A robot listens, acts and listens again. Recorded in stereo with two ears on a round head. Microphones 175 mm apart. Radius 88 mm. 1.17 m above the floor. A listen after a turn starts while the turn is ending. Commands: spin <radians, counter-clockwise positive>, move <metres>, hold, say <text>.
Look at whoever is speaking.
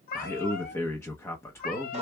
spin 0.52
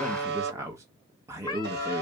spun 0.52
spin -0.26
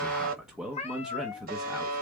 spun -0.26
say Found it: a man speaking, straight ahead.